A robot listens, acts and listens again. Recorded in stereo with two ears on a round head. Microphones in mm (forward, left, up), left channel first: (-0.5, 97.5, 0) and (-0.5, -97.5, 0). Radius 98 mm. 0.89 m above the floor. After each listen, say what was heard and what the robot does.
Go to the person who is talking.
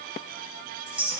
Keep listening.
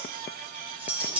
Keep listening.
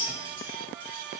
I can't make out anyone speaking to turn to.